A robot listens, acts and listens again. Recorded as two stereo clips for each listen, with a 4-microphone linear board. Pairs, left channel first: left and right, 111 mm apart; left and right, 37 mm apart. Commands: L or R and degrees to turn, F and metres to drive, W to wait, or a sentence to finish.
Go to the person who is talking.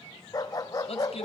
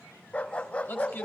L65
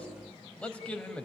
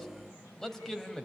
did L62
L10
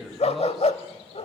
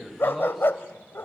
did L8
F1.0
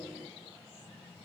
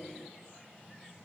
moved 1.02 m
W
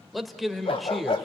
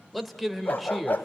F1.0
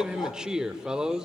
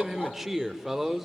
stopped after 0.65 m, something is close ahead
R10
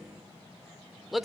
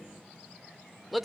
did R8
Arrived at the man speaking, straight ahead.